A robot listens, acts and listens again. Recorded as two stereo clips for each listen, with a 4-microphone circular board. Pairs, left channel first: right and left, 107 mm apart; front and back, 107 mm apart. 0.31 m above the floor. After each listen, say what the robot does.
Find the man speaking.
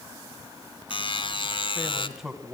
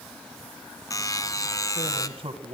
Turn 175° left.
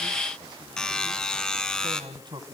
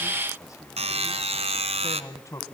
Turn 55° left.
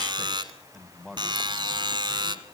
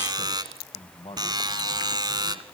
Found it: a man speaking, straight ahead, 1 to 2 m away.